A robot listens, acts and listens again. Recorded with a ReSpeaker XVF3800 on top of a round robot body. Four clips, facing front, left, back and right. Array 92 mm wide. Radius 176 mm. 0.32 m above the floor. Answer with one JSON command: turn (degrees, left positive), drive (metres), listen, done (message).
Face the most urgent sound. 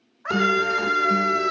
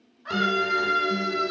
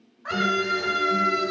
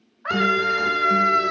{"turn": -65}
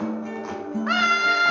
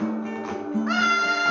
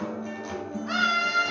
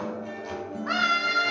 {"turn": 10}
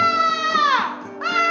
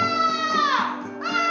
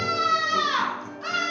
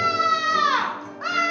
{"done": "Found it: a scream, straight ahead, 2 to 4 m away."}